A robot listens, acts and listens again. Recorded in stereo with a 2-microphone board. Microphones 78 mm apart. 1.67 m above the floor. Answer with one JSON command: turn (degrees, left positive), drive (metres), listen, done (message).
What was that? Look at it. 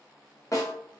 {"turn": 40}
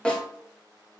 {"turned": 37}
{"turn": 15}
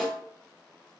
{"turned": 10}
{"done": "Facing the snare drum, under 1 m away."}